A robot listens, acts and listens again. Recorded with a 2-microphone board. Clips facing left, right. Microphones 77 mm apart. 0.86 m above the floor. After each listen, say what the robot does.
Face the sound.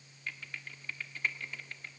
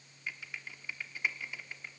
Turn 30° right.
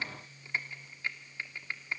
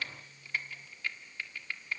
Turn 25° left.
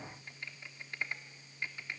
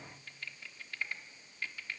Turn 20° left.
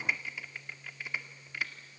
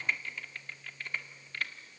Turn 10° left.
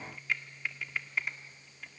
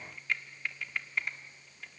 Found it: typing on a keyboard, straight ahead, 1 to 2 m away.